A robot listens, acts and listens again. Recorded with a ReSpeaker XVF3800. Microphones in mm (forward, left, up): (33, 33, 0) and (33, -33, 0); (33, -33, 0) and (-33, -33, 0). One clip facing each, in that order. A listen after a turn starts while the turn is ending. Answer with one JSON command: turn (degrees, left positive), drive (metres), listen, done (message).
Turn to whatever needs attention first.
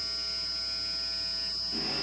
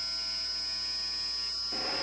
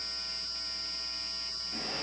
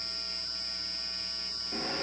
{"listen": true}
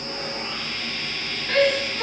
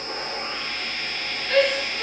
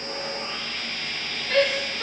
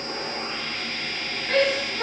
{"turn": 150}
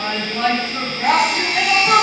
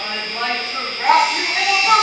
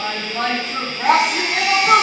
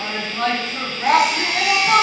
{"turn": -10}
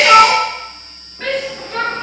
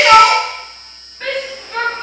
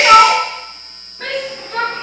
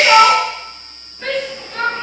{"done": "Facing the shout, over 4 m away."}